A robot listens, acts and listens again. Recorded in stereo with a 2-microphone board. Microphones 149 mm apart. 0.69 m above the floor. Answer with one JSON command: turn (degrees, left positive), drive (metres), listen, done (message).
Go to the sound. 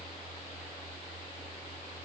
{"listen": true}
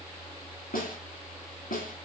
{"turn": 90}
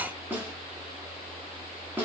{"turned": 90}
{"turn": -15}
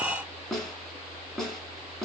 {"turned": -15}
{"drive": 1.0}
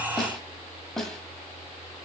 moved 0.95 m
{"drive": 1.0}
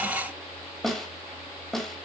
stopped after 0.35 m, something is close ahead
{"done": "Arrived at the snare drum, straight ahead."}